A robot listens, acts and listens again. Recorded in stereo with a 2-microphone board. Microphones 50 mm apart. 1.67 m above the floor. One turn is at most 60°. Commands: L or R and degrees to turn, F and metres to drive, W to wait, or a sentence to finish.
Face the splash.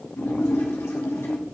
L60
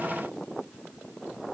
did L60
W
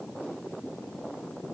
I heard a splash, but can't make it out now. It was about 15° left or 45° left.